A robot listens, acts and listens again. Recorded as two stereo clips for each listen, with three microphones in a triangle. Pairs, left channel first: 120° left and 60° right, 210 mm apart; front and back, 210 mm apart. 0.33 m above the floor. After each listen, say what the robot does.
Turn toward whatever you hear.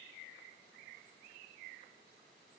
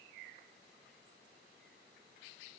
Keep listening.
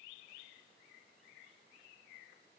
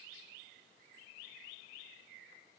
Keep listening.
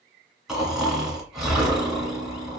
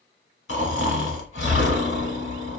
Turn 25° left.
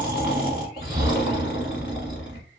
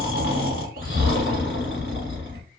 Facing the snoring, 1 to 2 m away.